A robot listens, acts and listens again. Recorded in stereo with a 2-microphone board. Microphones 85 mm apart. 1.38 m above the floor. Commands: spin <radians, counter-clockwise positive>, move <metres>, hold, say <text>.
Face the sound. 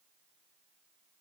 hold
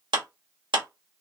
spin -1.57
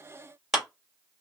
say Found it: a clap, straight ahead, 2 to 4 m away.